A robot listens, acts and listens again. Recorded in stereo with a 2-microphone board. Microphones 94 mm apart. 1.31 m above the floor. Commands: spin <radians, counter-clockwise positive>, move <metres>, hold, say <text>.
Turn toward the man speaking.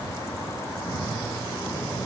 hold
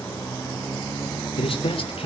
spin 1.22
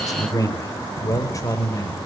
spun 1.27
spin 0.61
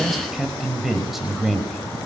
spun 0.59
say Facing the man speaking.